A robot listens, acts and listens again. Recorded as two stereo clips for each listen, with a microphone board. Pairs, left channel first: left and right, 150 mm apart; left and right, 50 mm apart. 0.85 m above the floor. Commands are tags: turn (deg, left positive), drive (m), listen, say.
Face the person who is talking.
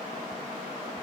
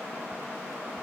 <listen/>
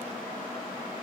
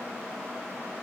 <listen/>
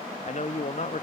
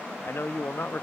<turn deg="50"/>
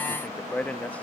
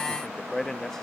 <turn deg="10"/>
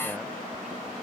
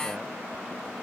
<listen/>
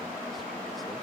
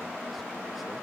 <listen/>
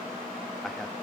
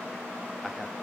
<say>Facing where the man speaking came from. I can't hear it now.</say>